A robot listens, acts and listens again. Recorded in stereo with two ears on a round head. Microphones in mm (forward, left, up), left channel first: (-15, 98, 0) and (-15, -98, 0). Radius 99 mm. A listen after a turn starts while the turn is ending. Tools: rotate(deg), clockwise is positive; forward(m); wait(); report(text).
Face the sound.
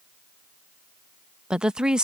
rotate(30)
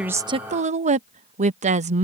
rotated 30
rotate(145)
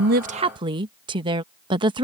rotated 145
rotate(20)
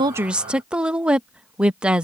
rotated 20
report("Found it: a woman speaking, straight ahead.")